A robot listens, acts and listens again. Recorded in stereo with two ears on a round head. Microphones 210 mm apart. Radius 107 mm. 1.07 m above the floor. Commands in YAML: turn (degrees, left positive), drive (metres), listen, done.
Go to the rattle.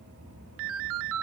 listen: true
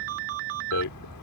turn: 90
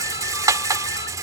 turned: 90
turn: -15
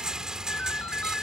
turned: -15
drive: 1.0
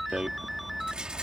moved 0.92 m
drive: 1.0
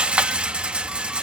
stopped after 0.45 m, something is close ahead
done: "I am next to the rattle."